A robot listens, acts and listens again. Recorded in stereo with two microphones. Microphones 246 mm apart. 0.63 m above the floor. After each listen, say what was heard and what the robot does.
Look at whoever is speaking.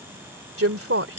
The woman speaking: about 65° right or 115° right. Turn 65° right.
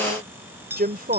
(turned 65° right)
So it is at 40° right. Turn 40° right.
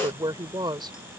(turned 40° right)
The woman speaking is now 20° right. Turn 20° right.
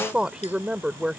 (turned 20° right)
Found it: a woman speaking, straight ahead.